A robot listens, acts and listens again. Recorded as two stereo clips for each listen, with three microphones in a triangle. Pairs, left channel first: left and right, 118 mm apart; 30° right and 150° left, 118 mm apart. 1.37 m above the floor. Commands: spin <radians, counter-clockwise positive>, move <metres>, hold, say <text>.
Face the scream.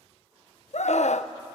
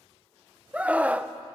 spin 1.31
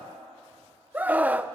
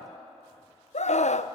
spin -0.17
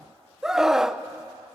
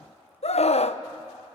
say Found it: a scream, straight ahead, under 1 m away.